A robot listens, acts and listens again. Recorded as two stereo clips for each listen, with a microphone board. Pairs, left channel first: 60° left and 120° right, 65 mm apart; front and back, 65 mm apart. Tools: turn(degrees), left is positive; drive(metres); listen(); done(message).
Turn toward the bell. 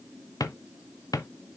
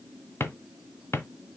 listen()
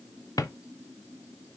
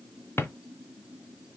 listen()
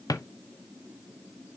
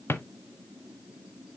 done("I can't make out a bell, only a drawer.")